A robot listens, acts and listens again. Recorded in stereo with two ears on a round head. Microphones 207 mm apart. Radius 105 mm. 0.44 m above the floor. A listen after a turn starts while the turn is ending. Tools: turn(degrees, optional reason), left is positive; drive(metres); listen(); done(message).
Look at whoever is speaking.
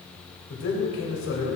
turn(degrees=60, reason="The man speaking: about 60° left or 120° left.")
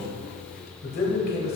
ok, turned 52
turn(degrees=50, reason="So it is at 50° left.")
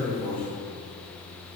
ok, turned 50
listen()
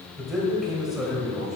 done("Found it: a man speaking, straight ahead, 1 to 2 m away.")